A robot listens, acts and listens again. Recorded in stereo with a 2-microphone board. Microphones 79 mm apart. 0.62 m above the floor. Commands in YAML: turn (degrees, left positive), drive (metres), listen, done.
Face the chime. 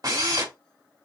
listen: true
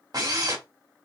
listen: true
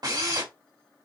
done: "I can't make out a chime to turn to."